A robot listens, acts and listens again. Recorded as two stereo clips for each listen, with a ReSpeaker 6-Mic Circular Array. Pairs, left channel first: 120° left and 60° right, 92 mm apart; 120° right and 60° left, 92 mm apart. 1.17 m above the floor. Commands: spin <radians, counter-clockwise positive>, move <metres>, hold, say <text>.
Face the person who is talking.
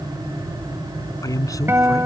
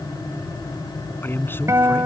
spin 2.97
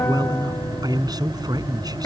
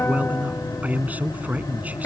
spin -0.26
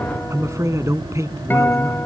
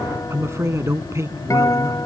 say Facing the man speaking.